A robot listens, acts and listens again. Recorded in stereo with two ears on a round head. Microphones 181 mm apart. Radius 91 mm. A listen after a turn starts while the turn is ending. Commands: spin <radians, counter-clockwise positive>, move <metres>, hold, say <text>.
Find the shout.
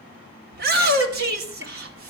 spin -0.96
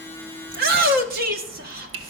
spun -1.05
spin -1.05
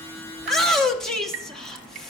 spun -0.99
say Facing the shout, 1 to 2 m away.